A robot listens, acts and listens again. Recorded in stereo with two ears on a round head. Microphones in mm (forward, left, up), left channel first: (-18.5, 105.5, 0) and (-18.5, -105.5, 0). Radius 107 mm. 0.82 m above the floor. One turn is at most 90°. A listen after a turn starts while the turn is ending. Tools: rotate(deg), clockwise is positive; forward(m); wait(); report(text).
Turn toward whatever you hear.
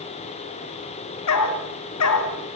rotate(-90)
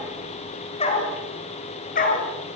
rotate(-35)
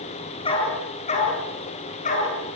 rotate(-30)
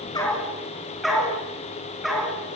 report("Facing the dog barking, 2 to 4 m away.")